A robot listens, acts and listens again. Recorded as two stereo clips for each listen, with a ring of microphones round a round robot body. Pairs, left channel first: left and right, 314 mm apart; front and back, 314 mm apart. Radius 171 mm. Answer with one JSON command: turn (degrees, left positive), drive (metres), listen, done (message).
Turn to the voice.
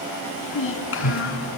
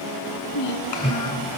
{"turn": 40}
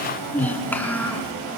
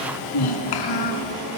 {"done": "Found it: a child speaking, straight ahead, 2 to 4 m away."}